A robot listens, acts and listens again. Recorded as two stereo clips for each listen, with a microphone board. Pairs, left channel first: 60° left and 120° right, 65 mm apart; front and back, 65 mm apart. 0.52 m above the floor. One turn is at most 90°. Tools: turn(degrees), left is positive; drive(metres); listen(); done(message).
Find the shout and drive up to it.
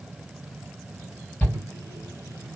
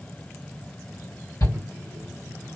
drive(metres=1.0)
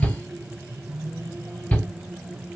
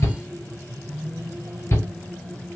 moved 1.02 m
turn(degrees=-10)
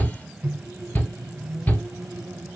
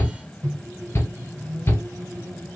drive(metres=1.0)
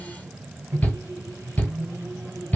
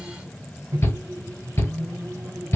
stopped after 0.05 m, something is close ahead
done("I am next to the shout.")